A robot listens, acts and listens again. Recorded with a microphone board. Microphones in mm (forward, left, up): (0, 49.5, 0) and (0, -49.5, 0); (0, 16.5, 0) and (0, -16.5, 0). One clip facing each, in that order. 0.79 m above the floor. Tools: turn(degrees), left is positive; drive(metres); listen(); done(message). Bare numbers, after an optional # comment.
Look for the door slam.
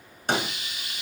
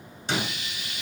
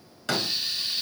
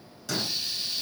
# The door slam: about 50° left or 130° left.
turn(50)
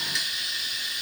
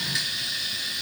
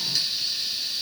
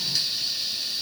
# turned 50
listen()
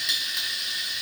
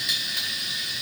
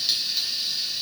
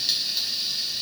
done("I heard a door slam, but can't make it out now. It was about straight ahead or 80° left.")